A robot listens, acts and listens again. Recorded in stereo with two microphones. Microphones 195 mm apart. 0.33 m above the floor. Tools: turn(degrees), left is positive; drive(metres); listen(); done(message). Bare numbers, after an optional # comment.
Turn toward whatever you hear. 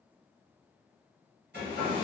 # The hair dryer: about 60° right or 120° right.
turn(-60)
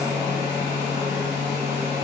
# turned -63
# So it is at 45° right.
turn(-45)
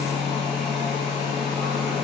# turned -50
done("Found it: a hair dryer, straight ahead, 1 to 2 m away.")